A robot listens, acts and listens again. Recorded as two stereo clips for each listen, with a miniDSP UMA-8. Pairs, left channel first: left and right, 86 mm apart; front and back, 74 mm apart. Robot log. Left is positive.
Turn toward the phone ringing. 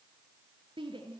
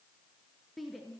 cmd idle
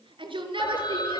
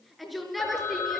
note: The phone ringing: 60° left.
cmd yaw +60
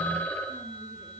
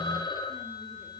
note: The phone ringing is now 20° left.
cmd yaw +20
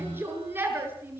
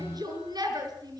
cmd idle
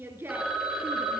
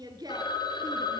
end: Facing the phone ringing.